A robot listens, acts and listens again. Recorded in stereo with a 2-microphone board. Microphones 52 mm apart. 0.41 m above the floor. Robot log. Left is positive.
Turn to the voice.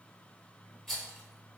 cmd idle
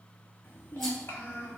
note: The child speaking: about 40° left or 140° left.
cmd yaw +40
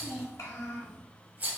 note: So it is at 95° left.
cmd yaw +95
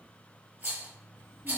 cmd idle
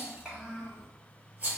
note: The child speaking is now 15° right.
cmd yaw -15
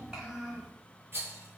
end: Found it: a child speaking, straight ahead.